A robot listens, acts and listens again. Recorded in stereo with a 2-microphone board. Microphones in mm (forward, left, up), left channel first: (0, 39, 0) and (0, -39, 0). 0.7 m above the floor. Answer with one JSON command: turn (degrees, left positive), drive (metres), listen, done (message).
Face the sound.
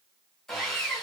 {"turn": 30}
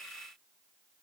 {"listen": true}
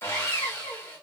{"turn": 145}
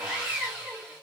{"turn": -15}
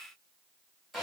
{"done": "Found it: sawing, straight ahead."}